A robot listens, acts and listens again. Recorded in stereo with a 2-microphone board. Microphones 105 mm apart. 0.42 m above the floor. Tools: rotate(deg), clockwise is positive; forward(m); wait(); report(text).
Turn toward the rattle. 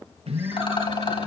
rotate(-55)
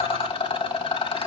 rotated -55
rotate(-65)
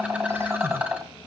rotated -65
rotate(15)
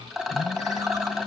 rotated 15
report("Facing the rattle.")